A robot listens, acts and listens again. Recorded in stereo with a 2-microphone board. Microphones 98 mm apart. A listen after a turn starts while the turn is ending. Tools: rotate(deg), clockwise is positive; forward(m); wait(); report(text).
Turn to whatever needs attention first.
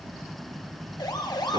rotate(-45)
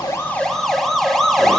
report("Found it: a siren, straight ahead, 2 to 4 m away.")